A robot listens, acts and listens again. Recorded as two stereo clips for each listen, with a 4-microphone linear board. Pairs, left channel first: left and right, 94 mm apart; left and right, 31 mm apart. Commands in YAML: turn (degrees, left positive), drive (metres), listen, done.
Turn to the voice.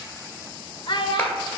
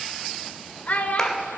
turn: 55
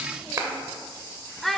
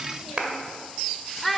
done: "Found it: a child speaking, straight ahead, under 1 m away."